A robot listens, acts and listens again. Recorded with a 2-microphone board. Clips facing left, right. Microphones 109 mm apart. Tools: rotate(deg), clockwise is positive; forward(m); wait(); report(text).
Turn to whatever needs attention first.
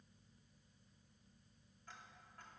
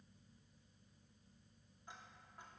wait()
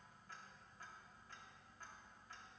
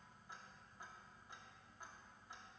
wait()
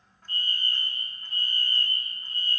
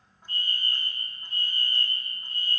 rotate(-40)
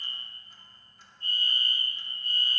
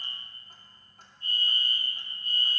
rotate(-95)
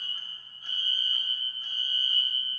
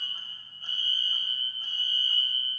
rotate(-10)
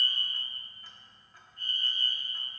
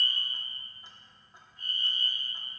report("Found it: a fire alarm, straight ahead, 2 to 4 m away.")